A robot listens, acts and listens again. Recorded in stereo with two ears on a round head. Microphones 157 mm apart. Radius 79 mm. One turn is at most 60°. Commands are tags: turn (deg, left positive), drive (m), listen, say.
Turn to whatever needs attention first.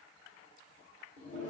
<listen/>
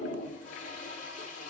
<listen/>
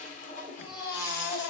<turn deg="60"/>
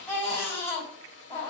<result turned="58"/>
<turn deg="15"/>
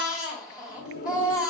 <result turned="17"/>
<say>Found it: a baby crying, straight ahead.</say>